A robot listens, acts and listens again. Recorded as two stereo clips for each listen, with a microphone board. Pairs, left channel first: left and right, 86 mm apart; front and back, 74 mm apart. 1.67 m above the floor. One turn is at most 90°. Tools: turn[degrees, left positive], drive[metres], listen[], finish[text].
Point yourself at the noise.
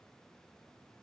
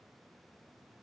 Action: listen[]
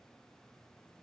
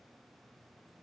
Action: listen[]
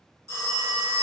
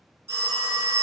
Thought: The phone ringing: 135° right.
Action: turn[-90]
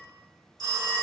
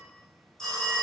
Thought: The phone ringing is now 80° right.
Action: turn[-80]
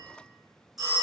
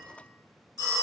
Action: finish[Found it: a phone ringing, straight ahead, 1 to 2 m away.]